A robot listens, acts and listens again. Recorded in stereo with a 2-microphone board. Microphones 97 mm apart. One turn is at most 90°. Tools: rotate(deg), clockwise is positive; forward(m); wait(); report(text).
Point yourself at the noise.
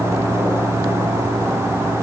wait()
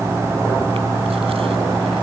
wait()
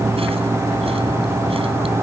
report("I can't make out anything to turn to.")